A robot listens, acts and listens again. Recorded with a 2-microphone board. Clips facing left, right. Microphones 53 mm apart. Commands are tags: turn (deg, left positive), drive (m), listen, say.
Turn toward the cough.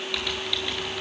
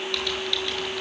<listen/>
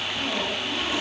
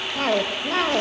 <turn deg="-70"/>
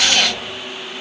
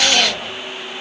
<listen/>
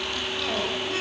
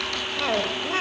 <turn deg="-35"/>
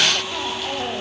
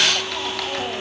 <listen/>
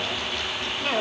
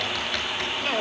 <say>Found it: a cough, straight ahead.</say>